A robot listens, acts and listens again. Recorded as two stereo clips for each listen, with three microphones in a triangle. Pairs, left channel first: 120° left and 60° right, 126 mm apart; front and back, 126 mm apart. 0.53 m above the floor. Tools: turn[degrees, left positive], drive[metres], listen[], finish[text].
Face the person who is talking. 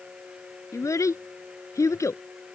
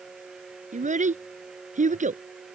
Thought: The child speaking: 175° right.
Action: turn[-175]
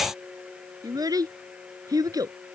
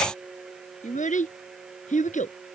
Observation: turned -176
Action: finish[Found it: a child speaking, straight ahead.]